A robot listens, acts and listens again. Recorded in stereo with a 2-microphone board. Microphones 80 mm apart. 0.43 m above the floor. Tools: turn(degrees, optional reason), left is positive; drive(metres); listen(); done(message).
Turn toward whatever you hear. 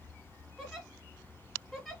turn(degrees=30)
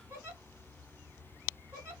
turn(degrees=-30, reason="So it is at 30° right.")
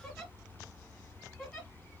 done("Facing the giggle.")